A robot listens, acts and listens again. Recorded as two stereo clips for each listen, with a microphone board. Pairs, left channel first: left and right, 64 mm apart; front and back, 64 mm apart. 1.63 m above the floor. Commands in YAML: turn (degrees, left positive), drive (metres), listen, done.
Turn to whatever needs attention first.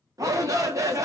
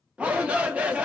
turn: -110
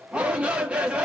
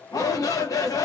turn: -20
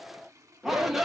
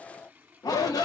done: "Facing the shout."